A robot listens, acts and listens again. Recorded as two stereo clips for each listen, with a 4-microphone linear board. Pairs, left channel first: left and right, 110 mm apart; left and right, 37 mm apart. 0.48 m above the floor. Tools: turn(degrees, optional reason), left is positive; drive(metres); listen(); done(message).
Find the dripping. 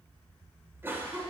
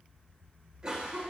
listen()
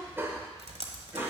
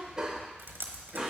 turn(degrees=-90)
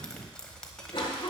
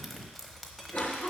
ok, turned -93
turn(degrees=10, reason="So it is at 10° left.")
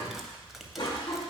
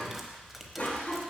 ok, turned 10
done("Found it: dripping, straight ahead.")